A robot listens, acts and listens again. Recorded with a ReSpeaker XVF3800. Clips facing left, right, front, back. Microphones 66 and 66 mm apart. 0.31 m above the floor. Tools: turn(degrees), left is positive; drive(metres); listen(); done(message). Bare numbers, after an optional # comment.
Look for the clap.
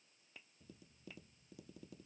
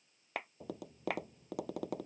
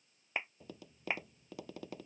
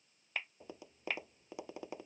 # The clap: 70° right.
turn(-70)
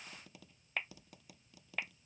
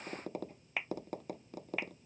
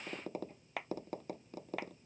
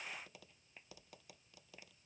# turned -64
done("Facing the clap.")